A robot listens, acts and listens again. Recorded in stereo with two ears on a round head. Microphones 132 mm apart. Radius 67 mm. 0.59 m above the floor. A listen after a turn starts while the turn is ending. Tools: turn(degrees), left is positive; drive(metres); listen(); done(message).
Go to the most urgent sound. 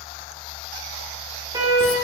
turn(degrees=-30)
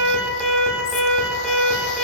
drive(metres=1.0)
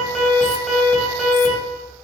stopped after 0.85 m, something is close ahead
done("Something is in my way. I am facing the alarm but have not reached it.")